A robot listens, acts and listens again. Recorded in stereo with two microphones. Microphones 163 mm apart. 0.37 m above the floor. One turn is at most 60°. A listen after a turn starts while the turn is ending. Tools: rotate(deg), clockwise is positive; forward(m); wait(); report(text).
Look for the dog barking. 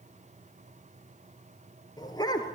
rotate(-25)
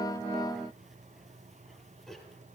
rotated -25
report("Facing the dog barking, 2 to 4 m away.")